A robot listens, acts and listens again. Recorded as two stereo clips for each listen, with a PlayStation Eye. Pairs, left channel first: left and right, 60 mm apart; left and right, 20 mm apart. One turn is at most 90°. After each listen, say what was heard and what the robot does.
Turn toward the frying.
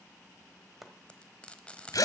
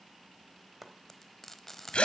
The frying: about 20° left or 160° left. Turn 20° left.
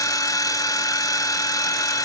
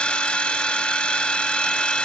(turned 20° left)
Keep listening.
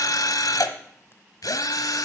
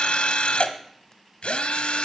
Keep listening.
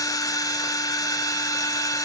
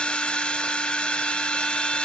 I heard frying, but can't make it out now. It was about straight ahead or 140° left.